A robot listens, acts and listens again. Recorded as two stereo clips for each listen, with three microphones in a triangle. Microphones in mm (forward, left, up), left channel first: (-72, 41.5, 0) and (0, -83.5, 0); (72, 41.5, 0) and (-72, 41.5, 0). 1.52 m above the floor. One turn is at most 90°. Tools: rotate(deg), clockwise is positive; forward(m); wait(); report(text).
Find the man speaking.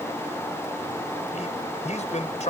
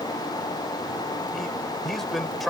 rotate(-90)
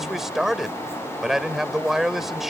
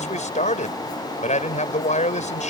rotate(-25)
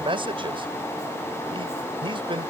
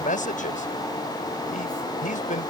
rotate(10)
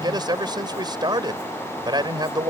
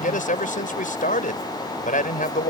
report("Facing the man speaking.")